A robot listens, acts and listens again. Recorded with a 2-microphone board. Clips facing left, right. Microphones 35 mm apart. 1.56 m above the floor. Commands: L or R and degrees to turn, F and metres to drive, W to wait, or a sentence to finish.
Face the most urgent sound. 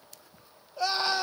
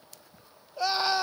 L30
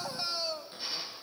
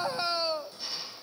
R30
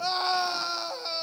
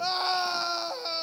Facing the scream, 1 to 2 m away.